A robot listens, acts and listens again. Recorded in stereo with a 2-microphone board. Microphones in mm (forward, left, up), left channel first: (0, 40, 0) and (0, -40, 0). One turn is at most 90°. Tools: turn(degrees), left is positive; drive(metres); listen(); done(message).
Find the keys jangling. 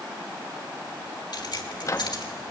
turn(degrees=60)
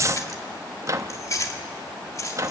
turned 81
turn(degrees=40)
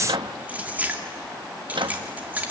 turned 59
turn(degrees=-20)
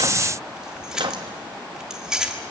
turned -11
turn(degrees=-10)
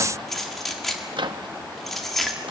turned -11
done("Found it: keys jangling, straight ahead, 2 to 4 m away.")